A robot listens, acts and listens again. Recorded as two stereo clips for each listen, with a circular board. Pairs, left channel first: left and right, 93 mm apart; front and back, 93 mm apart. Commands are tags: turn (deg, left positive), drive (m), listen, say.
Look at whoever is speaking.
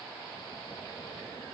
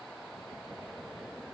<listen/>
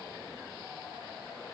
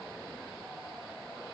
<listen/>
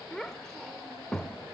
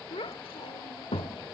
<say>Found it: a child speaking, straight ahead, under 1 m away.</say>